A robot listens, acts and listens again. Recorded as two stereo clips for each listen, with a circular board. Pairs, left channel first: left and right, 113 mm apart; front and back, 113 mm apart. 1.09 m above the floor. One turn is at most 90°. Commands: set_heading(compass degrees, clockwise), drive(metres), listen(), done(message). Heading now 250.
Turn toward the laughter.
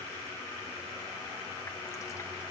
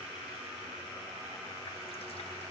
listen()
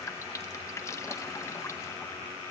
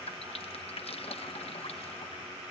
listen()
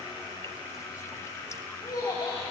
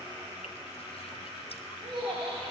set_heading(160)
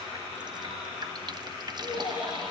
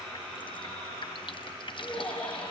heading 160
set_heading(80)
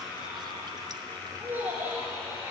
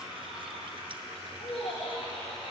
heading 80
set_heading(100)
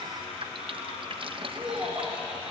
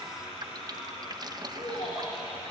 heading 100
done("Found it: laughter, straight ahead, 2 to 4 m away.")